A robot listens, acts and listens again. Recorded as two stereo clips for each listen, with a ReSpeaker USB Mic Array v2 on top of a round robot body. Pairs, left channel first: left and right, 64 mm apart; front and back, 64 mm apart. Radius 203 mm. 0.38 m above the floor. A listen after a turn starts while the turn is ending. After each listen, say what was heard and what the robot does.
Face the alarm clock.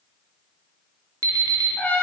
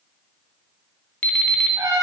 The alarm clock: 65° right. Turn 65° right.
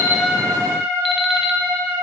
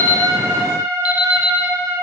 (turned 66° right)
Keep listening.
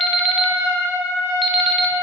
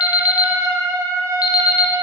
Found it: an alarm clock, straight ahead.